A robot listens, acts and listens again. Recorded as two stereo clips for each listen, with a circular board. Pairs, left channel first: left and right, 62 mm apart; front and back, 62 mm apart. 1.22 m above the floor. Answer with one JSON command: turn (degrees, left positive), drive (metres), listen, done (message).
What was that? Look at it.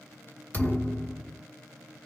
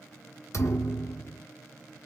{"turn": 30}
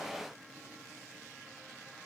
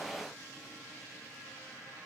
{"done": "Facing where the thud came from. I can't hear it now."}